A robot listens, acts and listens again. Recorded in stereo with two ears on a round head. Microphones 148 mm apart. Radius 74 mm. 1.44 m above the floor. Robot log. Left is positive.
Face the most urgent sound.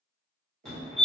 cmd yaw +30
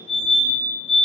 note: So it is at 145° left.
cmd yaw +145
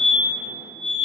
note: The fire alarm is now 55° left.
cmd yaw +55
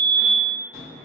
note: The fire alarm is now 20° left.
cmd yaw +20
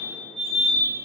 end: Found it: a fire alarm, straight ahead.